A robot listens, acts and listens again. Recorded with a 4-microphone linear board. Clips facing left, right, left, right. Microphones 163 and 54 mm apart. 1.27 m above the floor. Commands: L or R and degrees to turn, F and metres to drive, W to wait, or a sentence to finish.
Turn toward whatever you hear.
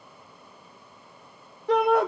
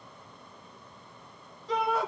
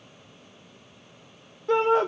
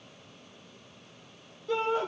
L60
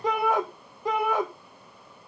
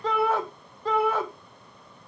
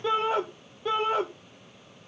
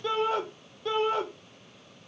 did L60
L15
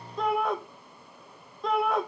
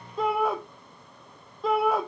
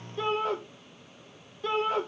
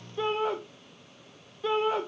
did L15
Found it: a shout, straight ahead.